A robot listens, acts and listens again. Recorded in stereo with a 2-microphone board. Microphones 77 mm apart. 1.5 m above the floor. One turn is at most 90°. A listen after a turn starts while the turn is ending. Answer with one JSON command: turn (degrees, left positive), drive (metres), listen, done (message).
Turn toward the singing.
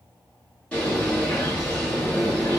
{"listen": true}
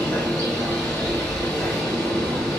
{"listen": true}
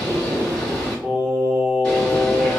{"turn": -20}
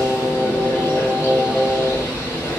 {"done": "Facing the singing, 1 to 2 m away."}